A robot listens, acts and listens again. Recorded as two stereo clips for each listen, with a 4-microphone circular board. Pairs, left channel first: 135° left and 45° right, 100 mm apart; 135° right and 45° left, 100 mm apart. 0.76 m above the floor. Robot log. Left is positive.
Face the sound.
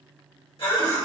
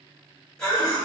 note: The cough: 140° left.
cmd yaw +140
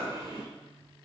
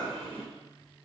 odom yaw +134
note: The cough is now 10° left.
cmd yaw +10
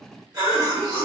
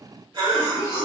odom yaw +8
end: Found it: a cough, straight ahead, 1 to 2 m away.